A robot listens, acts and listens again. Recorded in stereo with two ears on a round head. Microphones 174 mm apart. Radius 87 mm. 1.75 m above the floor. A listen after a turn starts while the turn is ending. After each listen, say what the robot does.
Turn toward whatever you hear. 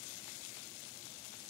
Keep listening.
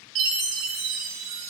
Turn 70° right.
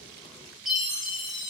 Found it: a chime, straight ahead.